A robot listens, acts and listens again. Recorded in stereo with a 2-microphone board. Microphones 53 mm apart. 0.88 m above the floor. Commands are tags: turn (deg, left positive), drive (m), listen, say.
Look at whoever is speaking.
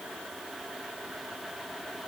<listen/>
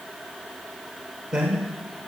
<turn deg="-15"/>
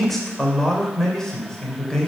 <turn deg="15"/>
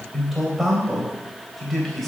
<say>Found it: a man speaking, straight ahead.</say>